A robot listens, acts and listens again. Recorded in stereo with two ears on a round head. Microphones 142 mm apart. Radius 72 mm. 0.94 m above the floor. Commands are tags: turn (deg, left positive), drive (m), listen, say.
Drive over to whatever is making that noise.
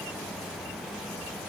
<listen/>
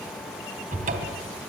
<turn deg="-55"/>
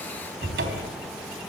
<turn deg="-70"/>
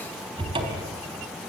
<turn deg="-30"/>
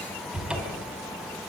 <drive m="1.0"/>
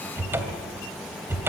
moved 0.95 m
<turn deg="-15"/>
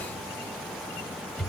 <drive m="1.0"/>
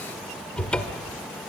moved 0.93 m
<drive m="1.0"/>
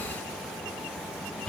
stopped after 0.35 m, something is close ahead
<turn deg="10"/>
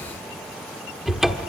<say>Arrived at the cupboard door, straight ahead.</say>